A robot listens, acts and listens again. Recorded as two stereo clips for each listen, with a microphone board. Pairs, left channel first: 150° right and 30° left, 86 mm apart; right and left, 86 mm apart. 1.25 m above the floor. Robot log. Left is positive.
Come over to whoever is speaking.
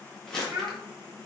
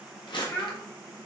note: The child speaking: 25° right.
cmd yaw -25
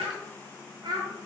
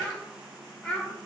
note: The child speaking is now 10° right.
cmd yaw -10
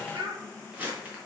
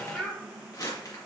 cmd fwd 1.0
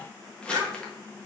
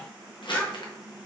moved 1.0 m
cmd fwd 1.0
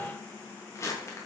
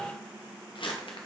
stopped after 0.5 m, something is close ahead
cmd idle
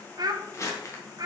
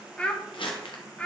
note: The child speaking is now 15° right.
cmd yaw -15
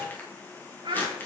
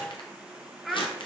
end: I am next to the child speaking.